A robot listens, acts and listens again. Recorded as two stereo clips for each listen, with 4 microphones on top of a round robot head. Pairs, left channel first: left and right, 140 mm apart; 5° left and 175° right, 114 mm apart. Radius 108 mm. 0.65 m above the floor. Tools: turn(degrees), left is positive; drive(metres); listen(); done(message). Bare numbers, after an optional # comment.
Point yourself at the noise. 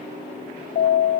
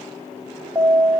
# The alarm: 120° left.
turn(120)
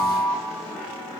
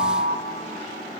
done("Facing the alarm, 1 to 2 m away.")